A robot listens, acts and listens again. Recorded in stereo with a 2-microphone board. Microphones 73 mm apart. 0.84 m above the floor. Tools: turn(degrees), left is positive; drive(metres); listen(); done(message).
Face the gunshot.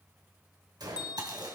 turn(degrees=-70)
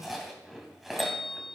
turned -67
listen()
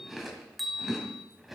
done("I heard a gunshot, but can't make it out now. It was about straight ahead or 45° right.")